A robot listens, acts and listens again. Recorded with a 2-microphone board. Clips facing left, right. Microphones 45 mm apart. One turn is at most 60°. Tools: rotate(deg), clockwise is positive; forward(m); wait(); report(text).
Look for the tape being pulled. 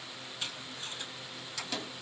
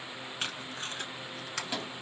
rotate(60)
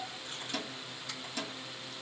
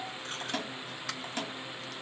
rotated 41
wait()
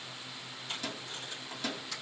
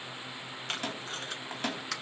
rotate(60)
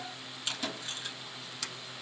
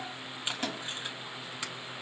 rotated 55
rotate(25)
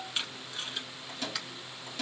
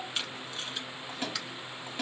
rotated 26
report("Found it: tape being pulled, straight ahead, under 1 m away.")